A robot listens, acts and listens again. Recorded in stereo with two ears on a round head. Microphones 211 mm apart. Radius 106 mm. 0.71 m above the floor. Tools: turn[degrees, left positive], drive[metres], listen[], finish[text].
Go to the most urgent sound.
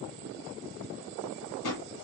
Action: listen[]
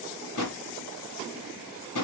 Action: listen[]
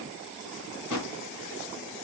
Action: finish[I can't make out anything urgent to turn to.]